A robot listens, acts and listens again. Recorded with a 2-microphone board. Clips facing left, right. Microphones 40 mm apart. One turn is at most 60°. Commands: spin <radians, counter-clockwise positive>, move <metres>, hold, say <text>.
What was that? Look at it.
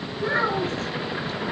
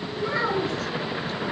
spin 0.87
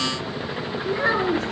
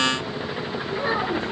spin 1.05
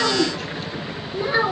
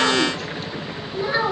say Found it: a child speaking, straight ahead.